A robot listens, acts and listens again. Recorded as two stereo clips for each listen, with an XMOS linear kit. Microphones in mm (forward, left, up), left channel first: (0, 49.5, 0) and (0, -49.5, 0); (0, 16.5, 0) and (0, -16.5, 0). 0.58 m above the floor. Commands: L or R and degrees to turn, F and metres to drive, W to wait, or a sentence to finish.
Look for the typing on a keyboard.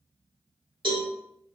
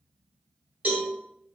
W
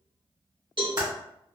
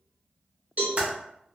R45
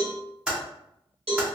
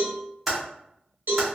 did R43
Found it: typing on a keyboard, straight ahead.